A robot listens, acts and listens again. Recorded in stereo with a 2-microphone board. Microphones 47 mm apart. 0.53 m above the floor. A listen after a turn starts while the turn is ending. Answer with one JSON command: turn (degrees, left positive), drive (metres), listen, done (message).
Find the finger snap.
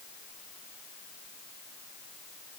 {"listen": true}
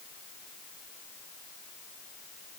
{"listen": true}
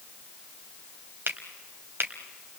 {"turn": -55}
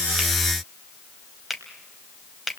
{"done": "Facing the finger snap, 2 to 4 m away."}